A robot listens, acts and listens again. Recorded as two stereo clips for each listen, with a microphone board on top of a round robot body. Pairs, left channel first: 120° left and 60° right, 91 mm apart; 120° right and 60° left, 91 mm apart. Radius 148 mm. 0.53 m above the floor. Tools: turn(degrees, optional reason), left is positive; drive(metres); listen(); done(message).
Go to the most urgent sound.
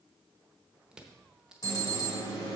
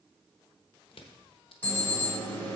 turn(degrees=170, reason="The alarm: 170° left.")
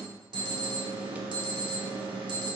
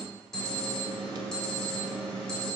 turn(degrees=-35, reason="The alarm is now 35° right.")
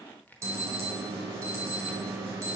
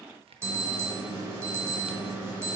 drive(metres=1.0)
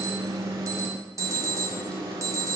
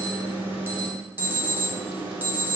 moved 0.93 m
turn(degrees=-10, reason="The alarm is now 10° right.")
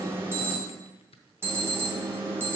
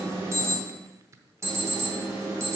drive(metres=1.0)
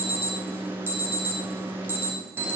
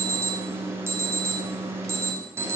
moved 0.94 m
drive(metres=1.0)
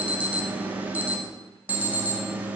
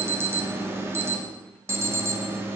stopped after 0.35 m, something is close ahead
done("Arrived at the alarm, straight ahead.")